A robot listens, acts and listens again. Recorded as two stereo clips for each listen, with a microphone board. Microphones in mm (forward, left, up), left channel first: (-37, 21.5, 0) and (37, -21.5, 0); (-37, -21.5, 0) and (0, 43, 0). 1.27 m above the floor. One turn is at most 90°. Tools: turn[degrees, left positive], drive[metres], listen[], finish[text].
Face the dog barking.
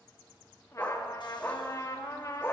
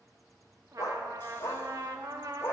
Thought: The dog barking: 160° right.
Action: turn[-90]
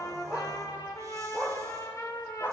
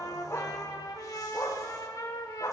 Thought: The dog barking is now 150° right.
Action: turn[-90]
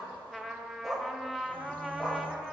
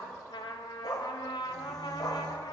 Thought: The dog barking is now 125° right.
Action: turn[-90]
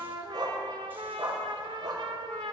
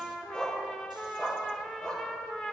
Thought: The dog barking is now 45° right.
Action: turn[-45]
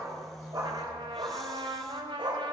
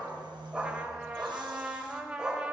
Thought: The dog barking is now 20° right.
Action: turn[-20]
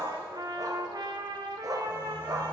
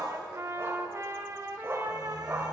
Action: finish[Facing the dog barking, 1 to 2 m away.]